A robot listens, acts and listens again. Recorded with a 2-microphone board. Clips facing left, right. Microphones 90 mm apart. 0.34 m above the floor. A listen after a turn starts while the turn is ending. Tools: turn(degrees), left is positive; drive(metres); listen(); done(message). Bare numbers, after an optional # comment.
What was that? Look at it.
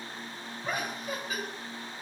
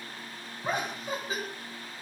# The laughter: about 30° right or 150° right.
turn(-30)
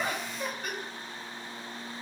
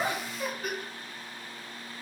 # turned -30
done("Facing the laughter, 2 to 4 m away.")